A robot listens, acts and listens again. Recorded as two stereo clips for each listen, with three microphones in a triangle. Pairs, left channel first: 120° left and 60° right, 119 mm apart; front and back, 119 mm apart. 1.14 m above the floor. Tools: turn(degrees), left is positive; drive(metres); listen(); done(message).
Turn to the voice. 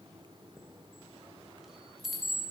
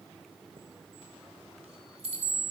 listen()
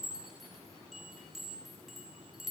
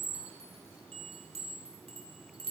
listen()
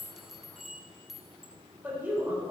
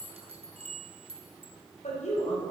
turn(degrees=15)
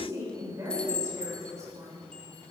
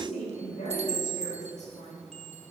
done("Found it: a woman speaking, straight ahead, 2 to 4 m away.")